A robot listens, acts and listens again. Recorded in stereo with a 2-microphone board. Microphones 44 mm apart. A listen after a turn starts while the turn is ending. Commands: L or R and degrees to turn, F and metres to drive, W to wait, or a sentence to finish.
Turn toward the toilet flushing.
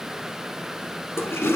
L90
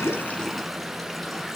W
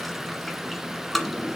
Found it: a toilet flushing, straight ahead, 1 to 2 m away.